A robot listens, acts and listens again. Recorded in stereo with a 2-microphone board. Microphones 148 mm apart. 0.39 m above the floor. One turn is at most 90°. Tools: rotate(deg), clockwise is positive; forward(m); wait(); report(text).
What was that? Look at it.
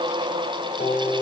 rotate(-90)
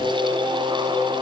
rotate(10)
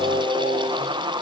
report("Found it: singing, straight ahead, over 4 m away.")